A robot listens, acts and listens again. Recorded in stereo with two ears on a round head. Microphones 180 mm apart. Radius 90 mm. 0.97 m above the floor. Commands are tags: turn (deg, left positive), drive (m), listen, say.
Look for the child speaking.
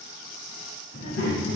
<turn deg="50"/>
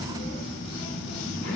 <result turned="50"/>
<turn deg="80"/>
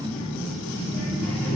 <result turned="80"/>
<say>Found it: a child speaking, straight ahead, over 4 m away.</say>